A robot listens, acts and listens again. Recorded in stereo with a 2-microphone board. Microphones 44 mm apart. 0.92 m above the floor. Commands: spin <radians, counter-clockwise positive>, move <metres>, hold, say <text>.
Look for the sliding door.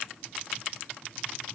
hold
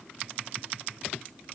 hold
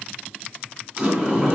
spin -0.44
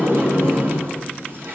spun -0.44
spin -2.27
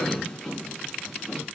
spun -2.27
say Found it: a sliding door, straight ahead, over 4 m away.